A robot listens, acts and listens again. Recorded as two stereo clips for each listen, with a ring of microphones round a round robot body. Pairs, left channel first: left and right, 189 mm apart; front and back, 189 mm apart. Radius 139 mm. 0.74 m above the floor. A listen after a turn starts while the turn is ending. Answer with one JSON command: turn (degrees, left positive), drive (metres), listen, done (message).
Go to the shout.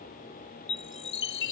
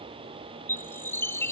{"listen": true}
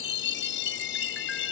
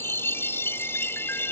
{"listen": true}
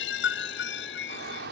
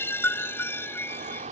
{"turn": -125}
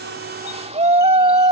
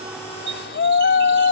{"turn": -35}
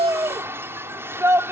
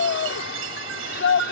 {"turn": -15}
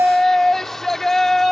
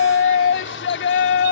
{"drive": 1.0}
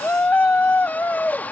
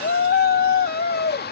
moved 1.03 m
{"turn": 10}
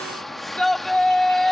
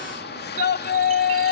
{"drive": 1.0}
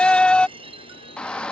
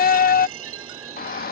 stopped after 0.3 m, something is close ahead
{"done": "I am next to the shout."}